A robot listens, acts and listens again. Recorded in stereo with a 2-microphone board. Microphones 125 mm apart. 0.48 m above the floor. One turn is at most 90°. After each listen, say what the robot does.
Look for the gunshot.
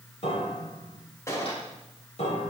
Turn 25° left.
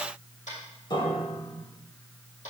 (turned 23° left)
Keep listening.
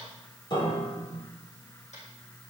I heard a gunshot, but can't make it out now. It was about straight ahead or 130° left.